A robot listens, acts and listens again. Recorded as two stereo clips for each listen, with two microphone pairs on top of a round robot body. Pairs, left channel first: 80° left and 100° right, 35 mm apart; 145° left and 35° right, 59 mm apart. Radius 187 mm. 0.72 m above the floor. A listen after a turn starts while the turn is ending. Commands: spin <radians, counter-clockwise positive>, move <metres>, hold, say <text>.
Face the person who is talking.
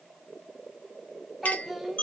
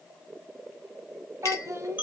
say Facing the child speaking.